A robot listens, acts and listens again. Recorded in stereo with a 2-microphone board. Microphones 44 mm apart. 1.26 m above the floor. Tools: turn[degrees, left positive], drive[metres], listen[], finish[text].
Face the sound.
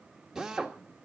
Action: turn[-30]
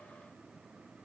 Action: listen[]
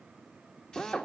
Thought: So it is at 20° left.
Action: turn[20]
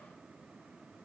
Action: listen[]
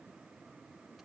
Action: listen[]
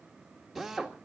Action: finish[Facing the drill, 1 to 2 m away.]